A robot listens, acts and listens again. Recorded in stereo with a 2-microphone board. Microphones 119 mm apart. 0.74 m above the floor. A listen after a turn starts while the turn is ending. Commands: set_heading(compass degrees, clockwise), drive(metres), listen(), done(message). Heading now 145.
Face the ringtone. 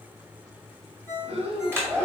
set_heading(120)
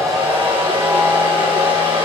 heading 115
listen()
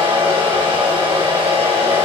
listen()
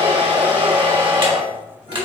done("I heard a ringtone, but can't make it out now. It was about 5° right or 125° left.")